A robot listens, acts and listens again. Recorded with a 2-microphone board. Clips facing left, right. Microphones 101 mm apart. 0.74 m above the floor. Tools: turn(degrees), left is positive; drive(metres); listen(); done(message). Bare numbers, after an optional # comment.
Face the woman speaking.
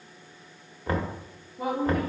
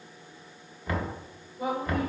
# The woman speaking: about 55° left or 125° left.
turn(55)
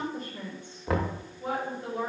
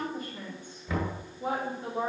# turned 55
# So it is at 25° right.
turn(-25)
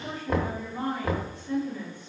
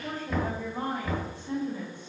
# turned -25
# The woman speaking is now 25° right.
turn(-25)
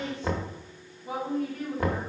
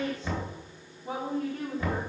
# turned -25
# The woman speaking is now 25° right.
turn(-25)
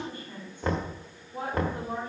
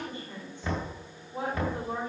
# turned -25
# The woman speaking is now 15° right.
turn(-15)
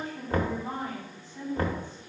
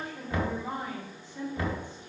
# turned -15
done("Facing the woman speaking, 2 to 4 m away.")